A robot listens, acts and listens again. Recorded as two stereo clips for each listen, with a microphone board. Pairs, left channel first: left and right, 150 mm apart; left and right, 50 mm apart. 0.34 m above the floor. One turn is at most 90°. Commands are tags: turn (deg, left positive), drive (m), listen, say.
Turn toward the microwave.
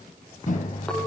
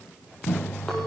<turn deg="55"/>
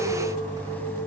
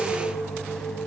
<listen/>
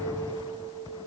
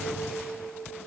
<listen/>
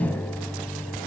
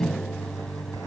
<turn deg="10"/>
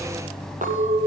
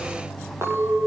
<say>Facing the microwave.</say>